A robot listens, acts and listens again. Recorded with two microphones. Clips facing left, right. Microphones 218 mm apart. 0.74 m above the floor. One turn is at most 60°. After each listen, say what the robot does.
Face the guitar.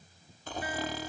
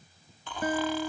Turn 45° right.
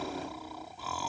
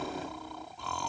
Keep listening.
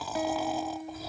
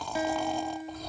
Facing the guitar.